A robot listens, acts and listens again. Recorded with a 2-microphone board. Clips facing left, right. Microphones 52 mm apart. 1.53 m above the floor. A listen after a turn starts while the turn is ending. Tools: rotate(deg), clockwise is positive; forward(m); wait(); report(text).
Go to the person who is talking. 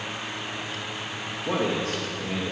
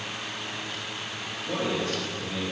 rotate(-70)
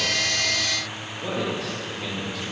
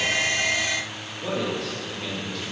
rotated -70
forward(1.0)
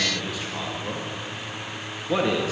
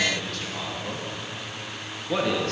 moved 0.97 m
rotate(-10)
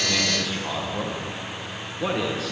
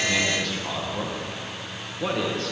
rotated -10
forward(1.0)
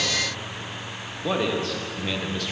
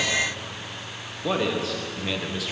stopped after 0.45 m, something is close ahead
report("I am next to the man speaking.")